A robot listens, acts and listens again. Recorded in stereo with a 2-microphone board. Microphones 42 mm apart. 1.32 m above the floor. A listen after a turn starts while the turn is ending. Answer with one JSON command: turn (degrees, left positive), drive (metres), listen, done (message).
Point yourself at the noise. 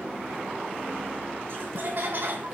{"turn": -50}
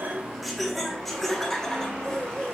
{"turn": 20}
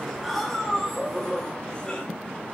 {"turn": 25}
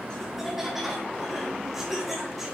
{"done": "Facing the laughter."}